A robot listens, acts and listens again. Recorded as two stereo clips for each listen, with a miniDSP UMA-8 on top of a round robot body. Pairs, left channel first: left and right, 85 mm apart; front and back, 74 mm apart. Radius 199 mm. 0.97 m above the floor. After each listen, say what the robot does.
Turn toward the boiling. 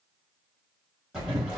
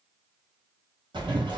Turn 175° right.
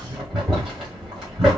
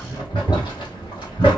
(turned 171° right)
Found it: boiling, straight ahead, 1 to 2 m away.